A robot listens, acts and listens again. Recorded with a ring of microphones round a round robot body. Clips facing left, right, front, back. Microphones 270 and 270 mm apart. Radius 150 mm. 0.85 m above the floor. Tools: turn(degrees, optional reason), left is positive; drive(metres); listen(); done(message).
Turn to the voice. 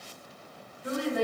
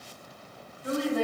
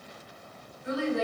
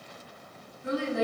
turn(degrees=165, reason="The woman speaking: 165° left.")
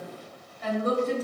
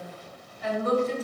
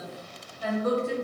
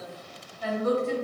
turn(degrees=50, reason="The woman speaking is now 50° left.")
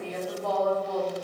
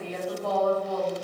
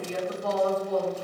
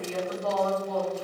done("Found it: a woman speaking, straight ahead.")